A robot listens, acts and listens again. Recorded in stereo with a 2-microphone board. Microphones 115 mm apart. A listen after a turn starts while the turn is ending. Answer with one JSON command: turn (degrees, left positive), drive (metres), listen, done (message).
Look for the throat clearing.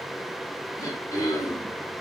{"turn": 30}
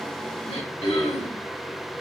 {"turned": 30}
{"turn": 120}
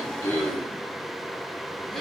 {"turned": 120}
{"done": "Found it: throat clearing, straight ahead, 1 to 2 m away."}